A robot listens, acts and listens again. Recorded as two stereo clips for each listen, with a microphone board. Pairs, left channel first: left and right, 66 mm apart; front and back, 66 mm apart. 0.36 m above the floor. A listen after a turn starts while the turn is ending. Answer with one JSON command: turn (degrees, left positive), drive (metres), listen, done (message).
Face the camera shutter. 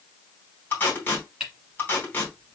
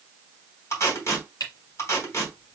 {"turn": -10}
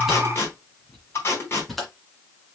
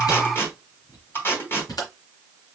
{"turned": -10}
{"done": "Found it: a camera shutter, straight ahead."}